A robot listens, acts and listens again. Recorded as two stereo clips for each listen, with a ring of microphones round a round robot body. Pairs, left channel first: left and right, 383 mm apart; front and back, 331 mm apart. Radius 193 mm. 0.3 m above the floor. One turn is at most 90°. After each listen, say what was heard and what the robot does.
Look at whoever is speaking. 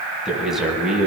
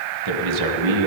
The man speaking: straight behind. Turn 90° left.
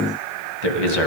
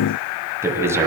The man speaking is now 100° left. Turn 90° left.
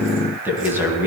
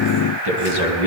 Found it: a man speaking, straight ahead, 2 to 4 m away.